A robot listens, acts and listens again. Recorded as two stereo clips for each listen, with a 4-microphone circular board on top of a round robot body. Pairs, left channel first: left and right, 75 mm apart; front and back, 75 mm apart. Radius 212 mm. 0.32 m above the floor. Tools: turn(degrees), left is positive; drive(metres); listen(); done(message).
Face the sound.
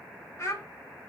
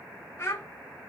turn(degrees=50)
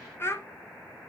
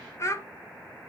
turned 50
turn(degrees=45)
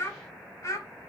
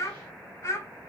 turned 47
turn(degrees=50)
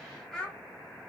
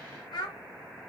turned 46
turn(degrees=15)
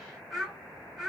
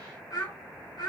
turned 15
done("Facing the child speaking.")